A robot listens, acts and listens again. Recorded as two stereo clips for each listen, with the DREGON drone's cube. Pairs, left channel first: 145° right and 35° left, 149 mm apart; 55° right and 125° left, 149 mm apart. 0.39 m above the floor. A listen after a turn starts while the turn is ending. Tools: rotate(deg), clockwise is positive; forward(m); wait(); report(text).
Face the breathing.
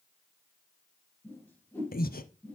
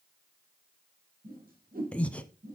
rotate(135)
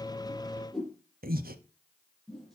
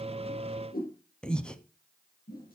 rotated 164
rotate(-30)
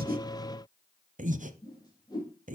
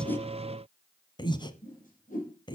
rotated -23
report("Facing the breathing, 1 to 2 m away.")